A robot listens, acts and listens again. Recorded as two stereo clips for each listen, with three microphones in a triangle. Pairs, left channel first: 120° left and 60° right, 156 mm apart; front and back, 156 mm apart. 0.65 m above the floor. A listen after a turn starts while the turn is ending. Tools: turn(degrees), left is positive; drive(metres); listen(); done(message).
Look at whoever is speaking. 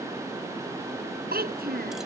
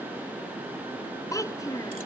turn(degrees=-70)
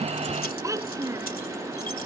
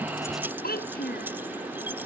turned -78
turn(degrees=10)
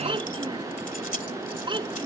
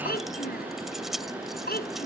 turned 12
done("Facing the child speaking.")